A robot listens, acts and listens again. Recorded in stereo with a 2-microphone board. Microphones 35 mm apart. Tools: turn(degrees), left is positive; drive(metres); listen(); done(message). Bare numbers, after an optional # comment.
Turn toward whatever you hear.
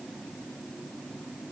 listen()
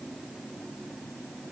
listen()
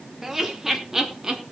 turn(-30)
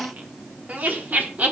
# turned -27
# So it is at 130° right.
turn(-130)
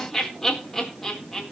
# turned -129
done("Facing the laughter.")